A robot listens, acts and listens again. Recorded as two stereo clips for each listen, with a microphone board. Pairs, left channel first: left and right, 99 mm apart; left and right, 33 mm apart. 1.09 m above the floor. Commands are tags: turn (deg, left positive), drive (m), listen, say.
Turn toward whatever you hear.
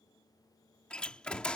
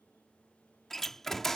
<turn deg="30"/>
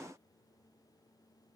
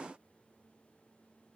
<listen/>
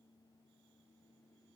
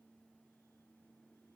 <say>I heard a door slam, but can't make it out now. It was about 20° right or 140° left.</say>